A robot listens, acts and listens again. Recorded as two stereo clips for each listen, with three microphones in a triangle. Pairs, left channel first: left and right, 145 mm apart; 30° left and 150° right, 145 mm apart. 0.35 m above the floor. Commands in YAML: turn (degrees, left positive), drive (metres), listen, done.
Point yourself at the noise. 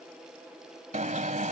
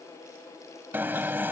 turn: -75
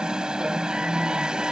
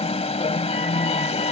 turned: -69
done: "Found it: an alarm, straight ahead."